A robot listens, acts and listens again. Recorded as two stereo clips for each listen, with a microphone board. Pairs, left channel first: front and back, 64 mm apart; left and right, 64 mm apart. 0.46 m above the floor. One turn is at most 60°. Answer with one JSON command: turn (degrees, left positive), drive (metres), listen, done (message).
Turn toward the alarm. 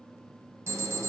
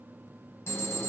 {"turn": 60}
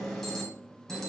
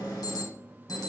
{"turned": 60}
{"turn": 60}
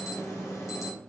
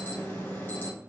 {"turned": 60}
{"turn": 30}
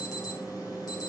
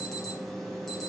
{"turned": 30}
{"done": "Found it: an alarm, straight ahead, 2 to 4 m away."}